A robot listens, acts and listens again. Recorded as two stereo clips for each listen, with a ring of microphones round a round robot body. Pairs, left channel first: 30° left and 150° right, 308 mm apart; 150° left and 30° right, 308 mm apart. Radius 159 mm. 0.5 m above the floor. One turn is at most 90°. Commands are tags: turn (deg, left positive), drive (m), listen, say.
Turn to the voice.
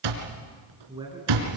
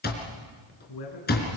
<turn deg="90"/>
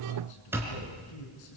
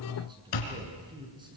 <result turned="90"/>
<turn deg="45"/>
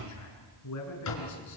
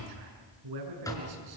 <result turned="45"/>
<turn deg="-10"/>
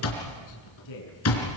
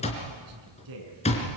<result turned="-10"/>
<say>Facing the man speaking.</say>